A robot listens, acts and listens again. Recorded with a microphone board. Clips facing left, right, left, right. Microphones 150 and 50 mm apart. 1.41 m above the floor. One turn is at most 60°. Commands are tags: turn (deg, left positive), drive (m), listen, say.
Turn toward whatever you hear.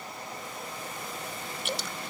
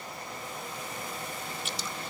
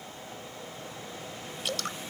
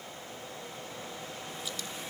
<turn deg="60"/>
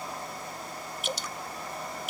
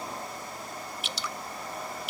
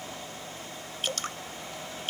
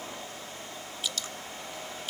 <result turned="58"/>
<turn deg="50"/>
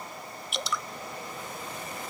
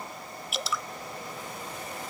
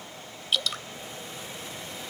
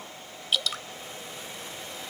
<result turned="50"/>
<say>Facing the dripping.</say>